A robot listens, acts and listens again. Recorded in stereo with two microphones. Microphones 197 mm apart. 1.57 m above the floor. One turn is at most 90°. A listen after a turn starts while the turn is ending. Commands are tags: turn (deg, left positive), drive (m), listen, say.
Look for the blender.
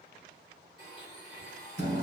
<turn deg="25"/>
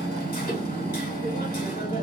<listen/>
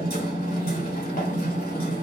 <listen/>
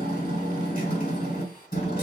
<say>I heard a blender, but can't make it out now. It was about straight ahead or 130° left.</say>